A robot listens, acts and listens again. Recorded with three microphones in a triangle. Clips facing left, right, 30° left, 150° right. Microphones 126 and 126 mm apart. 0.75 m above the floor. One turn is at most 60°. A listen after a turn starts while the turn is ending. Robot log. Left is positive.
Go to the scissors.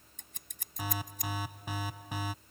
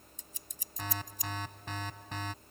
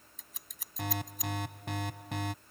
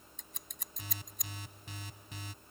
note: The scissors: 120° left.
cmd yaw +60
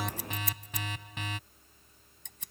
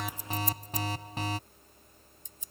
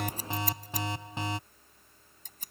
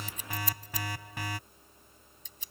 note: The scissors is now 70° left.
cmd yaw +60
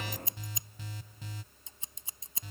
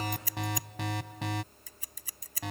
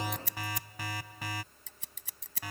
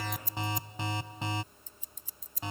note: The scissors is now 25° left.
cmd yaw +25
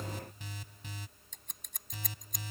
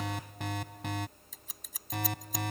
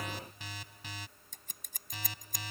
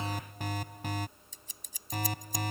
cmd fwd 1.0
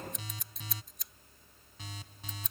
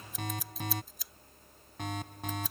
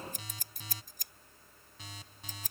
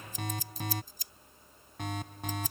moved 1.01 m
cmd fwd 1.0
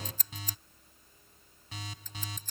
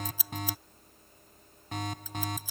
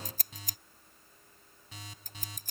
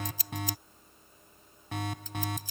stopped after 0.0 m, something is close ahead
end: Blocked. The scissors is further on, straight ahead.